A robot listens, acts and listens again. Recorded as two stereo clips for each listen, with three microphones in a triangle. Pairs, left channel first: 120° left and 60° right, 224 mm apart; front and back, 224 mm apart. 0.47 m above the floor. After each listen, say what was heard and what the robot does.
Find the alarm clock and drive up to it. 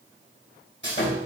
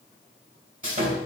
Keep listening.
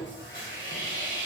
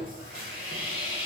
Keep listening.
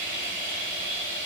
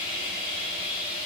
I can't make out an alarm clock to turn to.